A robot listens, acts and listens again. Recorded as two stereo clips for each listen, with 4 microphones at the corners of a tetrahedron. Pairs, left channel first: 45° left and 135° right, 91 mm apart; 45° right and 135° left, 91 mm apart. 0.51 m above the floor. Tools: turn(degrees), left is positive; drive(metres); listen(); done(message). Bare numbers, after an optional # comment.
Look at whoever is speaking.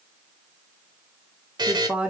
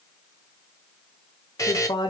# The woman speaking: 60° right.
turn(-60)
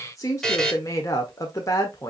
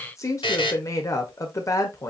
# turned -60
done("Facing the woman speaking.")